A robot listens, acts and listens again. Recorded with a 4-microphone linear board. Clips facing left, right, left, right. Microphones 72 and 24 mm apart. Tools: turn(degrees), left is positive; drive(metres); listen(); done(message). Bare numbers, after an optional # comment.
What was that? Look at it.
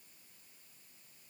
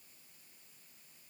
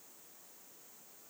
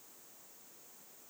listen()
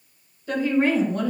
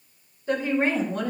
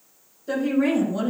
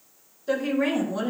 # The woman speaking: about 20° right or 160° right.
turn(-20)
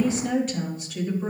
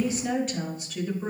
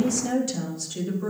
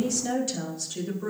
done("Facing the woman speaking.")